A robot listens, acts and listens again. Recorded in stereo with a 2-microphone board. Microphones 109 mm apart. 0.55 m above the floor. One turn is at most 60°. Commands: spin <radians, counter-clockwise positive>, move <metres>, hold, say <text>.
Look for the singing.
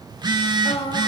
spin 0.96
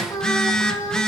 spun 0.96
spin 0.70
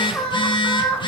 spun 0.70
spin 0.26
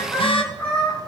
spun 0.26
spin 0.17
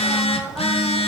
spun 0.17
hold
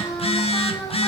say Found it: singing, straight ahead.